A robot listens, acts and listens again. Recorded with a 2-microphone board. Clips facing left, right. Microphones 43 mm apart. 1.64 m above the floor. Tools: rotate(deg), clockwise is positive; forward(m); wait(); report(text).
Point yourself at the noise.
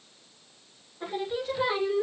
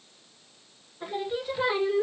rotate(15)
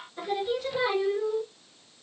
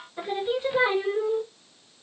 rotate(40)
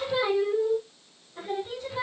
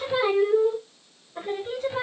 rotate(40)
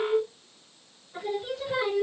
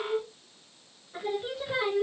rotate(10)
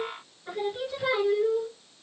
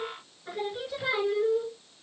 report("Facing the singing.")